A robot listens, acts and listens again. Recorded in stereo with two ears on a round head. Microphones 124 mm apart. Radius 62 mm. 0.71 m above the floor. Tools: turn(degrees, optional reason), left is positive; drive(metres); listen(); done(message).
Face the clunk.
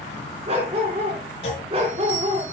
turn(degrees=45, reason="The clunk: about 45° left or 135° left.")
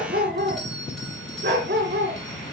listen()
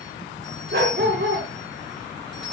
done("I heard a clunk, but can't make it out now. It was about straight ahead or 90° left.")